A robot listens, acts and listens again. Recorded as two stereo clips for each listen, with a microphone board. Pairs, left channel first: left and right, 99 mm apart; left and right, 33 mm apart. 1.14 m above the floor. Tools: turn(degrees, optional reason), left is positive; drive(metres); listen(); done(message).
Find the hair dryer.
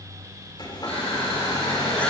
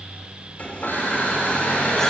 turn(degrees=45, reason="The hair dryer: about 45° left or 135° left.")
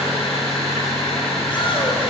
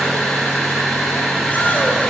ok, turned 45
listen()
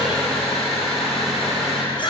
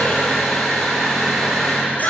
listen()
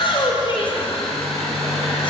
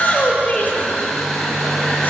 done("Found it: a hair dryer, straight ahead, 2 to 4 m away.")